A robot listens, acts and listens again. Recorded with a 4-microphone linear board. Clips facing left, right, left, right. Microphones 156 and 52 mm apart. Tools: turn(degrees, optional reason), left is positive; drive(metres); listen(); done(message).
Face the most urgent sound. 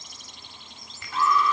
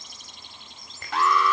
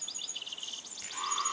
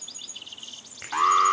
turn(degrees=-90)
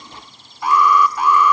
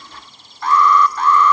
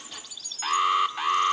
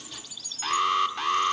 turn(degrees=10, reason="So it is at 10° left.")
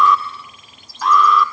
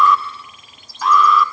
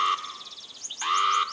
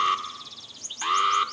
done("Found it: an alarm, straight ahead, 1 to 2 m away.")